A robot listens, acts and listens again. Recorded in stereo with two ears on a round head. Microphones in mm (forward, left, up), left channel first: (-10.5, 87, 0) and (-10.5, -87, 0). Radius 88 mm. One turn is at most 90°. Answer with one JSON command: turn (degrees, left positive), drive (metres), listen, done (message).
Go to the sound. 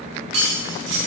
{"turn": -60}
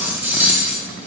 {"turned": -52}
{"turn": -10}
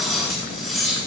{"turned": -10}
{"drive": 1.0}
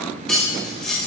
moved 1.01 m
{"drive": 1.0}
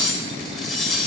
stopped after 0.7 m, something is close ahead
{"done": "I am next to the cutlery clinking."}